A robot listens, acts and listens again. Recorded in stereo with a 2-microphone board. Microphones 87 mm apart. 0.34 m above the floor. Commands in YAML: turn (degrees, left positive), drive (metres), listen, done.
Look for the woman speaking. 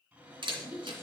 turn: -20
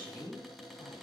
turn: -135
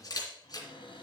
listen: true
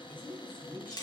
turn: -20
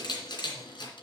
listen: true
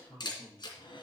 done: "Facing the woman speaking, over 4 m away."